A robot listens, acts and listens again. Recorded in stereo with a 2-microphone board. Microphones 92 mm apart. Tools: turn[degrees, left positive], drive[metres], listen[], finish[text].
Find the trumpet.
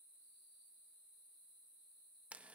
Action: listen[]
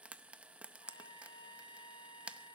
Thought: The trumpet: about 65° left or 115° left.
Action: turn[65]
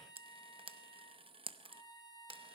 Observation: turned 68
Thought: So it is at 50° left.
Action: turn[50]
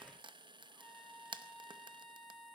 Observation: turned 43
Action: finish[Facing the trumpet, 2 to 4 m away.]